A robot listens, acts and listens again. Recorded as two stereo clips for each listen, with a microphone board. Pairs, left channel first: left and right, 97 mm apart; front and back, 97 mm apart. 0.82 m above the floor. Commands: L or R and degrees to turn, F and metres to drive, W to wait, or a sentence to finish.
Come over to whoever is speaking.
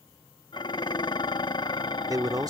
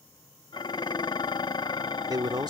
R140
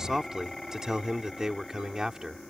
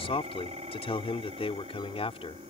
F1.0
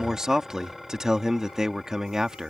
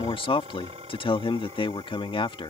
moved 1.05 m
R10
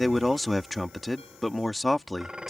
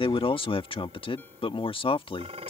F1.0
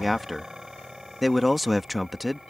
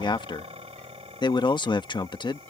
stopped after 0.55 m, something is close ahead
Arrived at the man speaking, straight ahead.